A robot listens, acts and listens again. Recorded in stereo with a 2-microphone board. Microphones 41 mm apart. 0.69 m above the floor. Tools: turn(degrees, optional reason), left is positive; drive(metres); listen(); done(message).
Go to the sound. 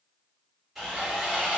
turn(degrees=-30)
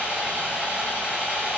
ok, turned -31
turn(degrees=-140, reason="So it is at 140° right.")
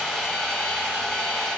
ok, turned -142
drive(metres=1.0)
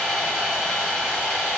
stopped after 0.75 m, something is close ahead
done("Arrived at the sawing, straight ahead.")